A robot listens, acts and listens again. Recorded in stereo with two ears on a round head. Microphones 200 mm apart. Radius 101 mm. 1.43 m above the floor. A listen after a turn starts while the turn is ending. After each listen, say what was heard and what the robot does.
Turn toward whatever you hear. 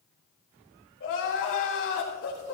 The crying: about 60° left or 120° left. Turn 60° left.
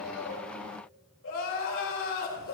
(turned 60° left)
So it is at 60° left. Turn 60° left.
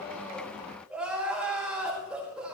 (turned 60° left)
Facing the crying, over 4 m away.